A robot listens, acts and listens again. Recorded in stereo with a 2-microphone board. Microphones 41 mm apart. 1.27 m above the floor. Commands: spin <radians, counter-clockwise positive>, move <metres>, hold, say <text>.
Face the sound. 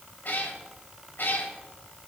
spin 1.05
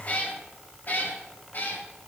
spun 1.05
spin 0.96
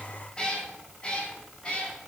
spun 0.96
spin 0.44
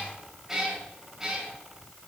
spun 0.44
spin -0.26
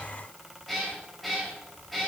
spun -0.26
say Found it: a cat meowing, straight ahead, 2 to 4 m away.